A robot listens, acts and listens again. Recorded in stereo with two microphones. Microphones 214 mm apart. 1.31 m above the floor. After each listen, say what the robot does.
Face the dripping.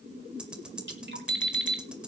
Turn 55° right.
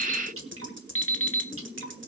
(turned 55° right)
Turn 70° right.
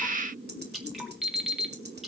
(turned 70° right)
Found it: dripping, straight ahead.